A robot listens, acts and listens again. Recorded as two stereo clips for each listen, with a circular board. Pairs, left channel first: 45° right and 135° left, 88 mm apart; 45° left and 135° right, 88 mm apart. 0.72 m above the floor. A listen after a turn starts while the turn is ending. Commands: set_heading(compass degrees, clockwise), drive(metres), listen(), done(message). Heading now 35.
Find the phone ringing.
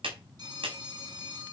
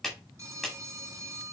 set_heading(225)
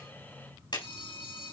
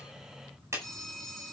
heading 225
set_heading(265)
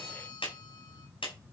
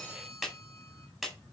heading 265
listen()
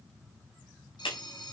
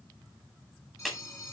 set_heading(275)
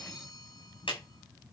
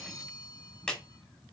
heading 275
done("Facing the phone ringing, 2 to 4 m away.")